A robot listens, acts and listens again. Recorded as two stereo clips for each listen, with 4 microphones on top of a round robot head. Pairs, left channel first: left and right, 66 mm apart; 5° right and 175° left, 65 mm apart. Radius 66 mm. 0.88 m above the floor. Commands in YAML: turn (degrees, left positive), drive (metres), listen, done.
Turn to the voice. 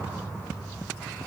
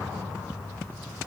listen: true
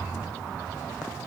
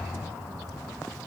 listen: true
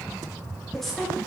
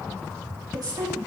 turn: 175
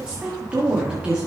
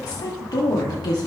turn: -15
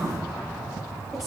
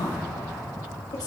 listen: true
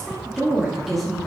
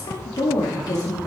done: "Found it: a woman speaking, straight ahead."